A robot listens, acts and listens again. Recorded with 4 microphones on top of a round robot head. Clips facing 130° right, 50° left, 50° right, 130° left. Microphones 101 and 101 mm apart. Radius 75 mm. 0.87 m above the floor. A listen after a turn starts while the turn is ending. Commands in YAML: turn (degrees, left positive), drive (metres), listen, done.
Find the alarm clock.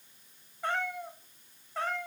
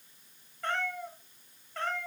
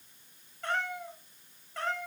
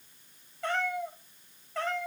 listen: true
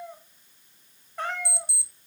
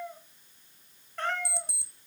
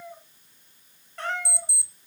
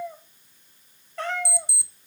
turn: 100
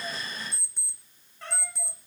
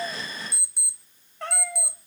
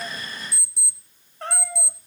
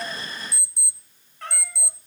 turn: -35
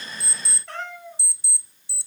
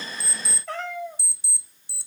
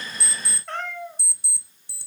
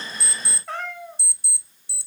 done: "Found it: an alarm clock, straight ahead, under 1 m away."